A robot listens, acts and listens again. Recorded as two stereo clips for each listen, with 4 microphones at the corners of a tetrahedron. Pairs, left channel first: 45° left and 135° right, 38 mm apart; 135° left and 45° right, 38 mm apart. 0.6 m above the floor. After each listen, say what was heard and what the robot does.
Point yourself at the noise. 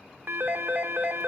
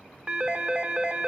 The phone ringing: 105° right. Turn 105° right.
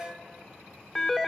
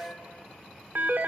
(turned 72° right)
The phone ringing is now 30° right. Turn 30° right.
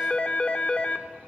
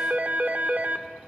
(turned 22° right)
The phone ringing is now 10° right. Turn 10° right.
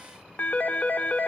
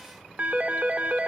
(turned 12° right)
Facing the phone ringing, under 1 m away.